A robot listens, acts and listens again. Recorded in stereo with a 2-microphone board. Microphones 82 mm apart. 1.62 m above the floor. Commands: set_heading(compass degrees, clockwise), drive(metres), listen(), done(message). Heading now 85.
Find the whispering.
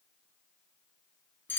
listen()
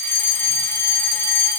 listen()
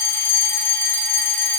done("I can't make out whispering to turn to.")